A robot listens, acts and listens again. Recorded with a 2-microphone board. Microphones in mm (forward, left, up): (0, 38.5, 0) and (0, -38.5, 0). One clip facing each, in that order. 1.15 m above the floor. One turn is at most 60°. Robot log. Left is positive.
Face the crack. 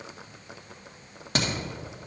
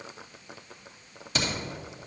note: The crack: about 55° left or 125° left.
cmd yaw +55
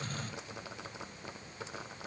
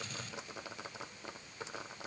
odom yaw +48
cmd idle
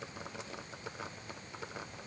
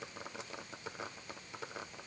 end: I heard a crack, but can't make it out now. It was about 5° left or 75° left.